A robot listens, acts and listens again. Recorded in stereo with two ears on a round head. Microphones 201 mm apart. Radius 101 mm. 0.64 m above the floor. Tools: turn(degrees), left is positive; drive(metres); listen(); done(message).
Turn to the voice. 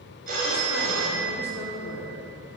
turn(degrees=65)
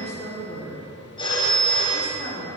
turn(degrees=35)
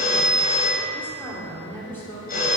turn(degrees=10)
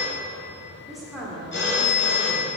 done("Facing the woman speaking, 1 to 2 m away.")